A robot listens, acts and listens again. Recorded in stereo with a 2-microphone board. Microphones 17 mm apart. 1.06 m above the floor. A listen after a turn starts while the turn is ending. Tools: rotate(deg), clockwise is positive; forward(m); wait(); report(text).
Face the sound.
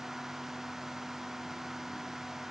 wait()
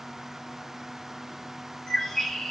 rotate(-55)
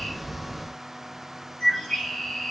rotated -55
rotate(-75)
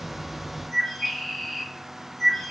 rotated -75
report("Facing the bird.")